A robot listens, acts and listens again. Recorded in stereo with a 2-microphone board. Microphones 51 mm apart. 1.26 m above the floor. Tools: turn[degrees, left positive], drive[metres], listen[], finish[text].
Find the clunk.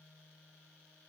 Action: listen[]
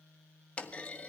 Thought: The clunk: about 25° left or 155° left.
Action: turn[25]
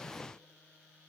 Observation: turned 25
Action: listen[]
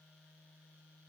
Action: finish[I heard a clunk, but can't make it out now. It was about straight ahead or 130° left.]